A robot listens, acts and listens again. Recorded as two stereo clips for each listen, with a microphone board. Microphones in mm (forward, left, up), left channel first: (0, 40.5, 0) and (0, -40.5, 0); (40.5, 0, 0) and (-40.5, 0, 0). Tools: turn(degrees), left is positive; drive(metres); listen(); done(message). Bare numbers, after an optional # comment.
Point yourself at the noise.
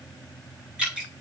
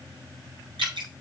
# The dripping: 165° right.
turn(-165)
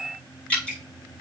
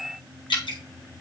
# The dripping is now 15° left.
turn(15)
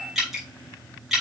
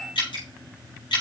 done("Facing the dripping.")